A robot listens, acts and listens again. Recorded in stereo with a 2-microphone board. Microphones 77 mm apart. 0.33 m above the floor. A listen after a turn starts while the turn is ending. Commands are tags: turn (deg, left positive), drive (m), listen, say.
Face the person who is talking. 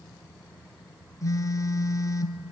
<listen/>
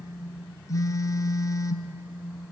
<listen/>
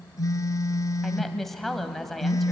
<turn deg="30"/>
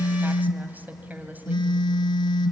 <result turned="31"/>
<turn deg="-25"/>
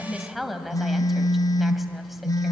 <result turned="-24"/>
<say>Facing the woman speaking, 1 to 2 m away.</say>